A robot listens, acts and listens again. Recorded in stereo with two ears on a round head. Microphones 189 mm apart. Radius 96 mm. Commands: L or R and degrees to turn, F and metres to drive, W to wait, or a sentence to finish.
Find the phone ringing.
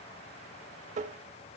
W
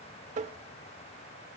W
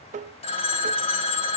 L30
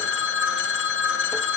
L120
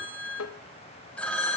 Facing the phone ringing, 2 to 4 m away.